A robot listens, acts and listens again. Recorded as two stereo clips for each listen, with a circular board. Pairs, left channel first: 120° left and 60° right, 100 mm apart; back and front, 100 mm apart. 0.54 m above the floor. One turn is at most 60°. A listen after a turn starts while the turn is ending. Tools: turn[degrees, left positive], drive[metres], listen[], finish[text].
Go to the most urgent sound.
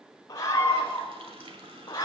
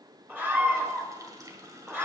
Thought: The scream: 70° left.
Action: turn[60]
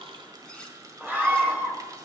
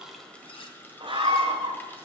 Thought: The scream is now 10° left.
Action: turn[10]
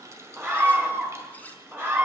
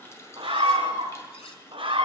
Action: drive[1.0]
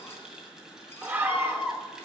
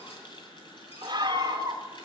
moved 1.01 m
Action: drive[1.0]
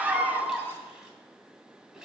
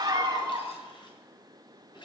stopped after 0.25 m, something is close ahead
Action: finish[Arrived at the scream, straight ahead.]